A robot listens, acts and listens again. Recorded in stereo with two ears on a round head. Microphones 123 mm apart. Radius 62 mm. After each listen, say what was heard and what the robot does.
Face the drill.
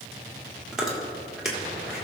Keep listening.
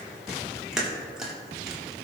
Keep listening.
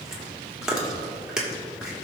I can't make out a drill to turn to.